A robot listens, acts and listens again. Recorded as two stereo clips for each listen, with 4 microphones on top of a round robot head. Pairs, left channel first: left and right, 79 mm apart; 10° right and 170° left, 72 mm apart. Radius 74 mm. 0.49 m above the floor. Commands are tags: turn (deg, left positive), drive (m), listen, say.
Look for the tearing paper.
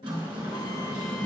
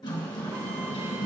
<listen/>
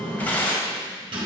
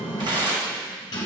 <turn deg="160"/>
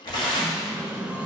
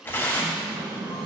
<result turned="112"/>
<turn deg="50"/>
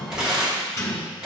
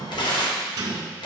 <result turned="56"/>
<say>Facing the tearing paper, 1 to 2 m away.</say>